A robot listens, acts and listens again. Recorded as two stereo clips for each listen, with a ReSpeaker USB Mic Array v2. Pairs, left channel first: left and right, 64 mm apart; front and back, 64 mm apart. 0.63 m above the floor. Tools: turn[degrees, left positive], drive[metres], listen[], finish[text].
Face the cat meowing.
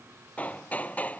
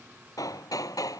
Action: listen[]
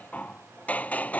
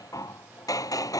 Action: listen[]
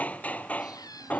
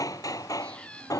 Thought: The cat meowing: 75° left.
Action: turn[75]
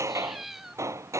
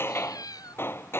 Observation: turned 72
Action: finish[Found it: a cat meowing, straight ahead.]